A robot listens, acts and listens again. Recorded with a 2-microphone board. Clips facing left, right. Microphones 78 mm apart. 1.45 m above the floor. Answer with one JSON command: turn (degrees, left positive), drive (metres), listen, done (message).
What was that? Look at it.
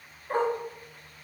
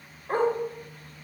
{"turn": -65}
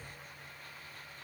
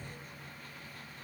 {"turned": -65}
{"listen": true}
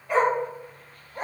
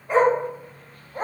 {"turn": -45}
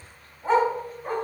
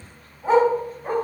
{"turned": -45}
{"turn": -10}
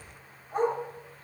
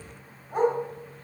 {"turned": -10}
{"turn": -10}
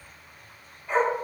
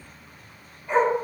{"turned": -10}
{"done": "Found it: a dog barking, straight ahead, over 4 m away."}